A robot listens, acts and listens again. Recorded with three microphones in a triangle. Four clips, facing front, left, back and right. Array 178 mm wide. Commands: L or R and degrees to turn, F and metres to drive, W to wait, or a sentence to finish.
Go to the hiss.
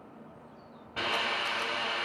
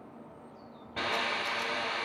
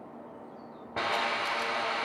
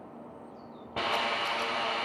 R135
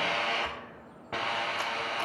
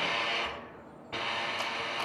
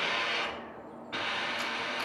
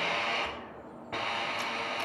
R25
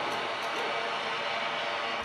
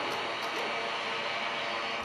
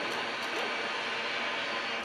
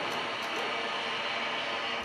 F1.0
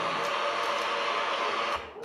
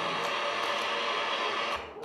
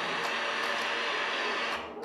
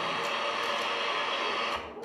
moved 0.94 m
F1.0
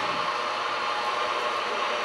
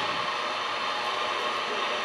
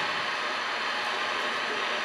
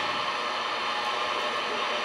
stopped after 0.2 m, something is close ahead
I am next to the hiss.